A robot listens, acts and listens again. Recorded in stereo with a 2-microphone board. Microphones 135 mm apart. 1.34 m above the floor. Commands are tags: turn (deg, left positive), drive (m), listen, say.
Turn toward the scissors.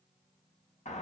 <listen/>
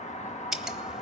<turn deg="-30"/>
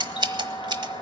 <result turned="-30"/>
<turn deg="-145"/>
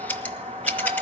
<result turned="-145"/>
<turn deg="10"/>
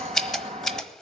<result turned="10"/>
<say>Found it: scissors, straight ahead, 1 to 2 m away.</say>